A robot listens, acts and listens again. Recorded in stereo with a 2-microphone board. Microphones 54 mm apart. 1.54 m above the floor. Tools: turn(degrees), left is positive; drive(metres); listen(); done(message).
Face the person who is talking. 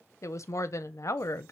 turn(degrees=70)
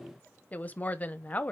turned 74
turn(degrees=30)
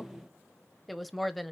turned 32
done("Found it: a woman speaking, straight ahead.")